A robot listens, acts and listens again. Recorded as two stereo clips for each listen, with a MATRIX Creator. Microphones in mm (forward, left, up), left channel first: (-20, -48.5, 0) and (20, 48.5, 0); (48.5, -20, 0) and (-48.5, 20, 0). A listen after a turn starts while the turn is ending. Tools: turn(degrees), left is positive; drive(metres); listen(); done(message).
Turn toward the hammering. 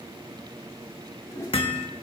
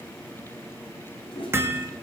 turn(degrees=-140)
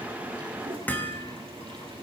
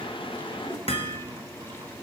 turn(degrees=-40)
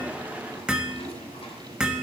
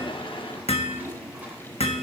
turn(degrees=-15)
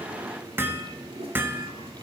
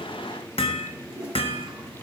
done("Facing the hammering, 1 to 2 m away.")